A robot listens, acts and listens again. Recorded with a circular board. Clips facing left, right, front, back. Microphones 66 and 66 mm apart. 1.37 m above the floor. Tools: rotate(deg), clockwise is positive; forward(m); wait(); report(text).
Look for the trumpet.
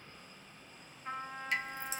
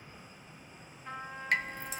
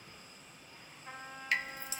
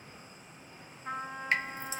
rotate(-160)
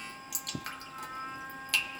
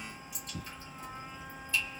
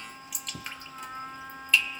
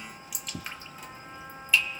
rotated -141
rotate(-20)
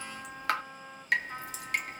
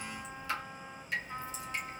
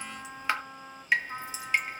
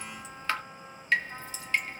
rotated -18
report("Facing the trumpet.")